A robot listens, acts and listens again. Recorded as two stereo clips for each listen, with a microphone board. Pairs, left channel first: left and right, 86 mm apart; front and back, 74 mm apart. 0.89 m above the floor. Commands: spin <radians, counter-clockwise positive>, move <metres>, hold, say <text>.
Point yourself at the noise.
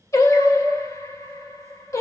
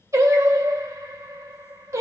spin 2.44
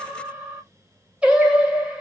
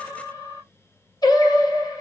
spin -0.26
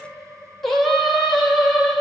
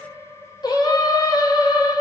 say Found it: singing, straight ahead.